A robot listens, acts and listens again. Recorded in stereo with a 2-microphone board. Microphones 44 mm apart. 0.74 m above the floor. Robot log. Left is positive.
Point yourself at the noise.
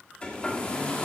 note: The hair dryer: about 25° left or 155° left.
cmd yaw +25
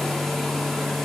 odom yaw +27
end: Found it: a hair dryer, straight ahead.